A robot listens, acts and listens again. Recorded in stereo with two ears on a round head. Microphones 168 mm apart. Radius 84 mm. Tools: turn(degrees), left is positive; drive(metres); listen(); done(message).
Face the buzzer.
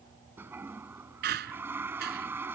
listen()
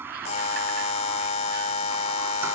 turn(degrees=35)
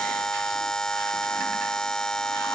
done("Found it: a buzzer, straight ahead.")